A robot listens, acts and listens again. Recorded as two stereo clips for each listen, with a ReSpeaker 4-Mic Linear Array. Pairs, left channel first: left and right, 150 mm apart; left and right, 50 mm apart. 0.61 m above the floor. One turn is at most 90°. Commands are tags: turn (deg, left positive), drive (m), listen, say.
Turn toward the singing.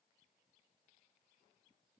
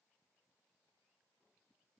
<listen/>
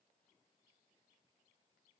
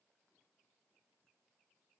<listen/>
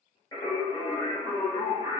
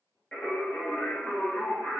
<turn deg="40"/>
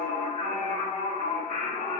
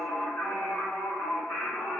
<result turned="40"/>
<turn deg="90"/>
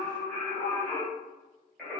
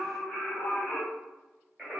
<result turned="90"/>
<say>Found it: singing, straight ahead.</say>